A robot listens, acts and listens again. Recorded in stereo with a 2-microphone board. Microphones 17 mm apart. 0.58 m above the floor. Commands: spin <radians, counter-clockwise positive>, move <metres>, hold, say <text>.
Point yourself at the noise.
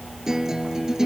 spin -0.61
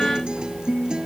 spin -1.92
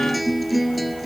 say Found it: a guitar, straight ahead.